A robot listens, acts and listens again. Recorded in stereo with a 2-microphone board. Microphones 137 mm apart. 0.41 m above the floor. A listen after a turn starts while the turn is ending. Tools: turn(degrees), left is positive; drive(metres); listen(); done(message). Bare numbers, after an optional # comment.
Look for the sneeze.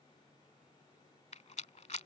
listen()
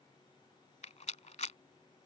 listen()
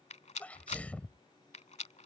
turn(30)
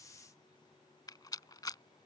listen()
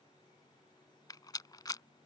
done("I heard a sneeze, but can't make it out now. It was about 20° right or 140° left.")